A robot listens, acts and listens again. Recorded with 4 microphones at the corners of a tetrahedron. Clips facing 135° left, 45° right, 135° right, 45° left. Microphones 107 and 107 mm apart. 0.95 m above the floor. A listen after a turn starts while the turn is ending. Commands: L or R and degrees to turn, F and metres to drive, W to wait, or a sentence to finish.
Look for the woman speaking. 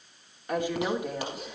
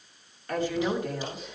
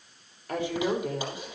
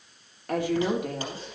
L60
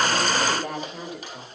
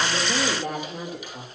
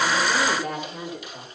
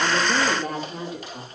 R10
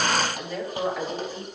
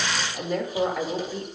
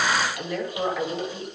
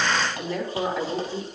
R10
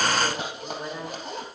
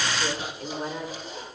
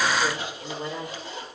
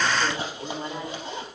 Facing the woman speaking, 2 to 4 m away.